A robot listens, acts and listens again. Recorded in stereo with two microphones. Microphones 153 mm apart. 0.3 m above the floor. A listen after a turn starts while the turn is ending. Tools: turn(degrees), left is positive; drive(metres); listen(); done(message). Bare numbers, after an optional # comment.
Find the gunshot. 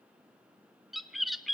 listen()
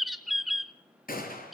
# The gunshot: about 70° left or 110° left.
turn(70)
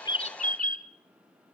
listen()
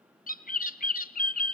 done("I heard a gunshot, but can't make it out now. It was about straight ahead or 40° left.")